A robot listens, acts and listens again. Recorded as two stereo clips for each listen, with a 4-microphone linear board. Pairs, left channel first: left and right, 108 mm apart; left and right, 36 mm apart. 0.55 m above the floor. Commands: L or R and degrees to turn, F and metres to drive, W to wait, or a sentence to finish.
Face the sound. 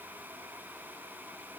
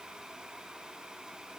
W
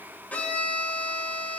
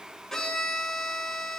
L15
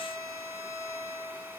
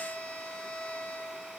L150
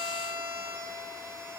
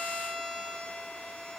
L35
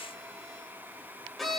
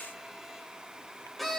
Found it: a violin, straight ahead.